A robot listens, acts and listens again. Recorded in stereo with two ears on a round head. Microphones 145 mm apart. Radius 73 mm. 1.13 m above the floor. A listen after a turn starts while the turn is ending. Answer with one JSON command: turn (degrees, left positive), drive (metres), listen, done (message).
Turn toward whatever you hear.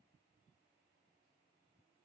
{"listen": true}
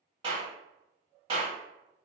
{"turn": -30}
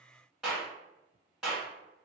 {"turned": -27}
{"done": "Found it: a clap, straight ahead."}